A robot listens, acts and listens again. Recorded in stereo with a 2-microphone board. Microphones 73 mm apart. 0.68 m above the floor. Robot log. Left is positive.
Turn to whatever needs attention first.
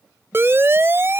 note: The siren: about 35° right or 145° right.
cmd yaw -35
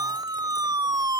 note: So it is at 110° right.
cmd yaw -110
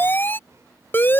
note: The siren is now 30° left.
cmd yaw +30
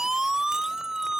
note: The siren is now 10° right.
cmd yaw -10
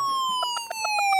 end: Found it: a siren, straight ahead.